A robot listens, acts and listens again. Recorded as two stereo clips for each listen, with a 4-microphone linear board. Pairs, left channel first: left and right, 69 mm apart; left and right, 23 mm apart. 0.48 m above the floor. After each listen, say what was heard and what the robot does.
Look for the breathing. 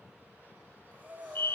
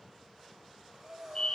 The breathing: about 25° right or 155° right. Turn 25° right.
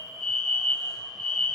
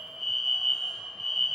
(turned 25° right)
Keep listening.
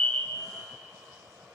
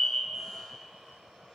Keep listening.
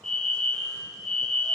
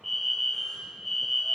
I heard breathing, but can't make it out now. It was about straight ahead or 130° right.